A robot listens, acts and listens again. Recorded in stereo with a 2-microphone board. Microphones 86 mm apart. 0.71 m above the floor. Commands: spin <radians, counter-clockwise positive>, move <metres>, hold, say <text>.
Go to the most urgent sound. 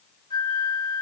hold
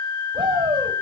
spin -1.22
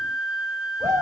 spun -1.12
spin -0.70
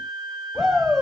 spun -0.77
move 1.0
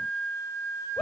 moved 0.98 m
move 1.0
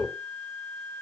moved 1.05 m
move 1.0
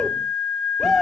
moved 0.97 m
move 1.0
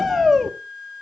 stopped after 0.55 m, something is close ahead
say I am next to the shout.